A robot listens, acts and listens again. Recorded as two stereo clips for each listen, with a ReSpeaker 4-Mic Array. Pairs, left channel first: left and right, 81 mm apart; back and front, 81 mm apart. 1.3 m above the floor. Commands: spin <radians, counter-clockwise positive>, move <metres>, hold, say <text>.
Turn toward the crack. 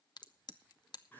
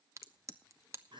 spin 0.96
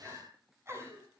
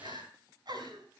say I heard a crack from this way, but can't make it out now.